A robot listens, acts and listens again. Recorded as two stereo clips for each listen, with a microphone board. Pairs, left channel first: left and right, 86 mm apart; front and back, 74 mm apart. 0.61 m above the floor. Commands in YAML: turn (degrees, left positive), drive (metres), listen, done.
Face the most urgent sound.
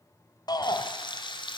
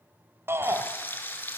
turn: 125
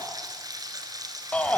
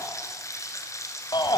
turn: 15
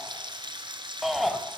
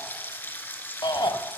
done: "Facing the shout."